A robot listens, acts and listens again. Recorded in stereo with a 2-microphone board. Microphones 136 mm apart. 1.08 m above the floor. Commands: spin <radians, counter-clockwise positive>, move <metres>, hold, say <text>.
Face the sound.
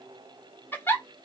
spin 0.52
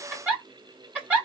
spin -0.26
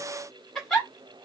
say Found it: a giggle, straight ahead, 1 to 2 m away.